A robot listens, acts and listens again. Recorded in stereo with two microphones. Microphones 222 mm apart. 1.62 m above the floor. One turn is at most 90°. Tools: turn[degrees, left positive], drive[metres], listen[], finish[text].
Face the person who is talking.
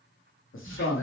Thought: The man speaking: about 65° left or 115° left.
Action: turn[65]
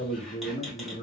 Thought: So it is at 35° left.
Action: turn[35]
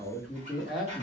Action: finish[Facing the man speaking.]